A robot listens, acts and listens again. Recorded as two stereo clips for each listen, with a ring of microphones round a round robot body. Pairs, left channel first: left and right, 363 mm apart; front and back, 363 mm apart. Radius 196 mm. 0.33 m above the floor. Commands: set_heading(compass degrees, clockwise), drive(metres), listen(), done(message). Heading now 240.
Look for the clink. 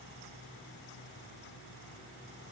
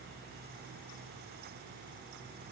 listen()
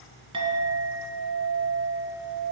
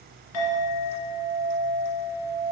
set_heading(255)
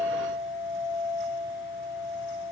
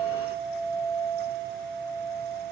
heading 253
done("Found it: a clink, straight ahead.")